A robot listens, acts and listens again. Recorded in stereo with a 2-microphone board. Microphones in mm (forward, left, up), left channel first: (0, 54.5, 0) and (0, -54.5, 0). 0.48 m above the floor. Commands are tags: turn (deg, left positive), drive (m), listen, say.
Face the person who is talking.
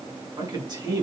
<turn deg="-40"/>
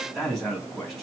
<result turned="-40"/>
<say>Facing the man speaking.</say>